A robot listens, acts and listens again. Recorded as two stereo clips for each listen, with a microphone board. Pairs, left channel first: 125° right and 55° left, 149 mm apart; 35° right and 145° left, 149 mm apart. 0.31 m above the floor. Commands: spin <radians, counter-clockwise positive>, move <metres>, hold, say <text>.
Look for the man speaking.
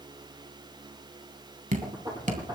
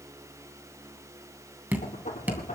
hold
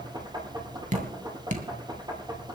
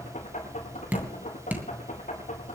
hold
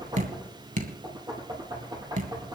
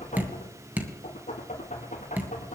say I can't make out a man speaking to turn to.